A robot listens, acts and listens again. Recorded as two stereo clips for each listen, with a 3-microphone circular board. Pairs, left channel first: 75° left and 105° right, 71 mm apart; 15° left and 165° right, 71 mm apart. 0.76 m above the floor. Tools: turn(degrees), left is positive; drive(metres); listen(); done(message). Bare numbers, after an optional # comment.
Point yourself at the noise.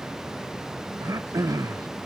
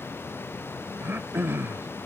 # The throat clearing: 115° right.
turn(-115)
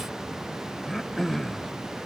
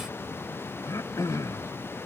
# The throat clearing is now 10° right.
turn(-10)
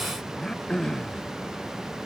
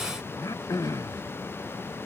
done("Found it: throat clearing, straight ahead.")